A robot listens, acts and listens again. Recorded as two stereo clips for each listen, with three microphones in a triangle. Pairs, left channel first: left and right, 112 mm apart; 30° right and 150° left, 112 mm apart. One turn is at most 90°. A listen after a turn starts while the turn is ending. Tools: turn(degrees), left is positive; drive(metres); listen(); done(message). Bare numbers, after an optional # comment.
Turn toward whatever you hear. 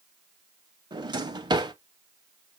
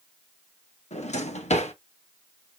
# The drawer: 40° right.
turn(-40)
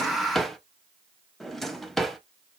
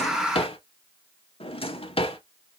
done("Found it: a drawer, straight ahead, under 1 m away.")